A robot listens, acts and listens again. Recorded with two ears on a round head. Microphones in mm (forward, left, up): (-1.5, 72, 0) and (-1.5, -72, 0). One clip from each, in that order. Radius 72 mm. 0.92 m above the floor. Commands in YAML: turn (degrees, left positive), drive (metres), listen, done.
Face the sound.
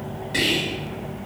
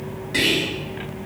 turn: 30
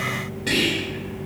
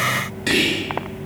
turn: -35
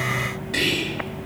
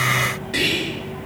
done: "Found it: whispering, straight ahead."